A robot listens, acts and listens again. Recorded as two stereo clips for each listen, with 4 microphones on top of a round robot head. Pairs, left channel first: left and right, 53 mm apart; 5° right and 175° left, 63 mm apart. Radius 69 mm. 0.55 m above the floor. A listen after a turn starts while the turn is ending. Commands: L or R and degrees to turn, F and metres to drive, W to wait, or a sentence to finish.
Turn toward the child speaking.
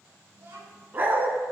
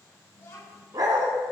R50
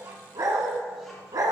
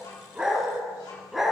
W
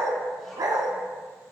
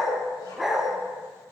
W
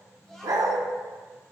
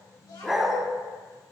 Found it: a child speaking, straight ahead, over 4 m away.